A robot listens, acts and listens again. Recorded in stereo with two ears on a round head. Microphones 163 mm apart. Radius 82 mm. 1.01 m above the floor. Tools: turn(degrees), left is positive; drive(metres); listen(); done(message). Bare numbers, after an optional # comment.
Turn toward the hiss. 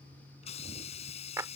# The hiss: about 35° left or 145° left.
turn(35)
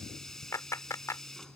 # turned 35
done("Found it: a hiss, straight ahead.")